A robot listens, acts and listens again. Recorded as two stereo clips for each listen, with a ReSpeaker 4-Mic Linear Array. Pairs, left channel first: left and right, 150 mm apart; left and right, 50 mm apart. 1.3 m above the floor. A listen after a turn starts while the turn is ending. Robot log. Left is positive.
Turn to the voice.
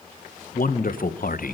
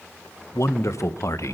note: The man speaking: about 70° left or 110° left.
cmd yaw +70
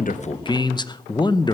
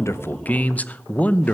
note: So it is at 30° left.
cmd yaw +30
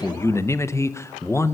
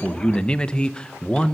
note: The man speaking is now 20° left.
cmd yaw +20
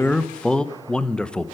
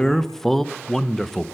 end: Facing the man speaking, under 1 m away.